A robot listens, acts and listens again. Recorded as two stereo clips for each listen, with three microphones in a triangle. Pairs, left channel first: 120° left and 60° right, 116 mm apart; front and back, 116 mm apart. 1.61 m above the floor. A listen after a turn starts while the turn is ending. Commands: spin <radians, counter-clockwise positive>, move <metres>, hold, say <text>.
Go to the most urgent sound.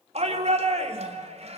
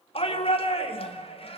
spin -0.61
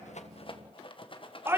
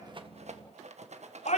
spin 0.17
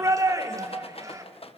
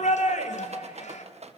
move 1.0
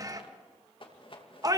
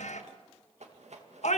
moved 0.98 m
move 1.0
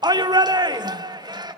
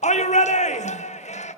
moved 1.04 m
move 1.0
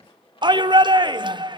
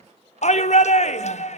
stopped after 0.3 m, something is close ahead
spin -0.17
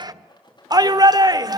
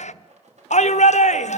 say I am next to the shout.